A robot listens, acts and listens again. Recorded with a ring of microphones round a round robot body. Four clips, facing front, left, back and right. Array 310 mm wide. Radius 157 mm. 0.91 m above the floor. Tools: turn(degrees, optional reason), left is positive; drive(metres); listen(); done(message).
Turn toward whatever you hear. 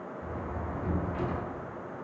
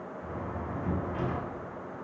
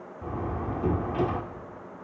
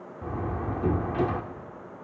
turn(degrees=-130, reason="The door slam: 130° right.")
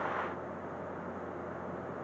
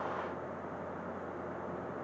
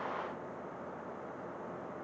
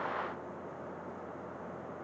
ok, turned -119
turn(degrees=-10, reason="Nothing new. It was at 10° right.")
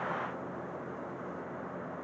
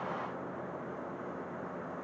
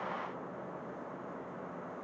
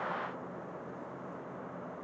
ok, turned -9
done("Facing where the door slam came from. I can't hear it now.")